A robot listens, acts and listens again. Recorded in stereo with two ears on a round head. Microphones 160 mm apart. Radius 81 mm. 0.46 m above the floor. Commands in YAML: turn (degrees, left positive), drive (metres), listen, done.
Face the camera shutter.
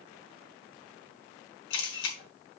turn: 70
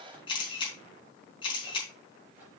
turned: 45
turn: 30
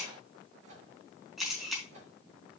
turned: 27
done: "Found it: a camera shutter, straight ahead, over 4 m away."